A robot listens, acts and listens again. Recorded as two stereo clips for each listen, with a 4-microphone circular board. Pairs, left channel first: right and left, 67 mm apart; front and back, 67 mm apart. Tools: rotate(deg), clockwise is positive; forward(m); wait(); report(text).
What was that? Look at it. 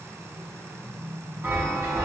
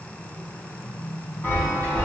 rotate(-45)
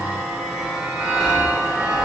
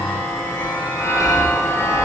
rotate(-10)
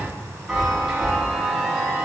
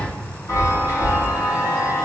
report("Found it: a chime, straight ahead, 1 to 2 m away.")